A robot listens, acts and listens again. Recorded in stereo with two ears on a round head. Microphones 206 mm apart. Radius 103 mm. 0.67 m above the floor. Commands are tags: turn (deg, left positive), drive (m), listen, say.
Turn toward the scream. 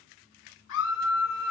<turn deg="60"/>
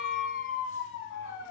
<turn deg="60"/>
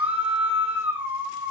<say>Facing the scream.</say>